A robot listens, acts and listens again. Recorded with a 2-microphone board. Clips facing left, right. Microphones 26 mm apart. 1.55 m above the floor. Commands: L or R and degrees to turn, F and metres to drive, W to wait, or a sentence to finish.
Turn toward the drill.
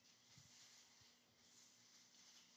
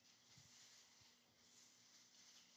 W
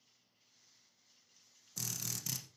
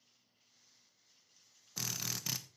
R30
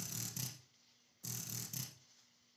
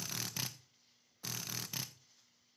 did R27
R120
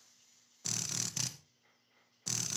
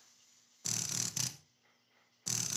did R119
Facing the drill.